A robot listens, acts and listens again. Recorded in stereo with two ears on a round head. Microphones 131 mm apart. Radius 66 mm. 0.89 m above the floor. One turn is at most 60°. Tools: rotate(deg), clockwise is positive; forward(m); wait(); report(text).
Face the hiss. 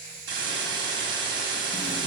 rotate(60)
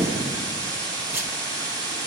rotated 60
rotate(25)
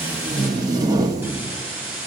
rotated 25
rotate(15)
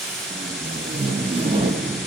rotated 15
report("Found it: a hiss, straight ahead, 2 to 4 m away.")